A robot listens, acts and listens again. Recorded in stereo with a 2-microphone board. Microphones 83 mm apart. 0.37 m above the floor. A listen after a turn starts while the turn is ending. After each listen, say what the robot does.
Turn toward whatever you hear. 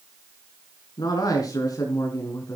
Turn 40° left.
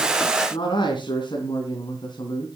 Turn 115° left.
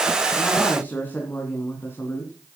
Turn 35° left.
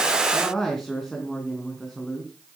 Facing the man speaking.